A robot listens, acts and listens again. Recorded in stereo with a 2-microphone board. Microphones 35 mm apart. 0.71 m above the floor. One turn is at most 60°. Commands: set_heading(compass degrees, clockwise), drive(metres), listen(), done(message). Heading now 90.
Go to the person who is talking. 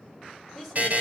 set_heading(60)
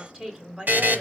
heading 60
set_heading(90)
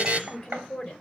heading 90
set_heading(75)
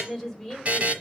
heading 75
drive(1.0)
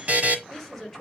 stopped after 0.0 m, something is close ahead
done("Blocked. The woman speaking is further on, straight ahead.")